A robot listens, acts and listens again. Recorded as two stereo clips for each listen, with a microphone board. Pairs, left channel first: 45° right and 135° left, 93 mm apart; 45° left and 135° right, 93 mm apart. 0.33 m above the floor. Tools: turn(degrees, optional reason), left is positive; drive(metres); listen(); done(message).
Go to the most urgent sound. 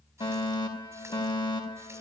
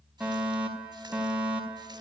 turn(degrees=-60, reason="The fire alarm: 60° right.")
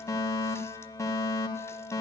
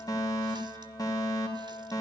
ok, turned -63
drive(metres=1.0)
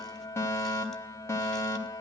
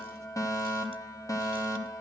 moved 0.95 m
drive(metres=1.0)
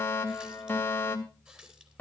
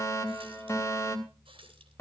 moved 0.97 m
turn(degrees=10, reason="The fire alarm is now 10° left.")
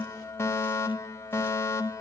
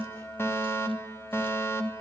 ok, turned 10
drive(metres=1.0)
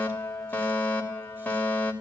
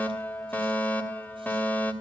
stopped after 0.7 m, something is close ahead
done("Arrived at the fire alarm, straight ahead.")